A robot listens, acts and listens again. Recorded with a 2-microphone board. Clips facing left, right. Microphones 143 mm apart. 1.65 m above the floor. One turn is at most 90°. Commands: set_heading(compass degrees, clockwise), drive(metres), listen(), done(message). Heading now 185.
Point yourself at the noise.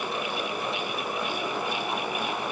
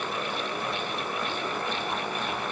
listen()
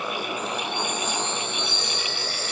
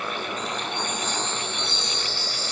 set_heading(125)
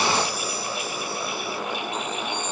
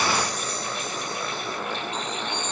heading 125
listen()
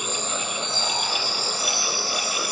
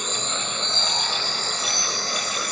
set_heading(115)
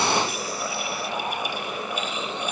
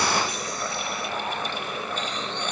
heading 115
listen()
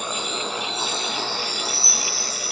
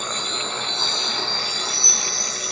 done("Found it: a chime, straight ahead.")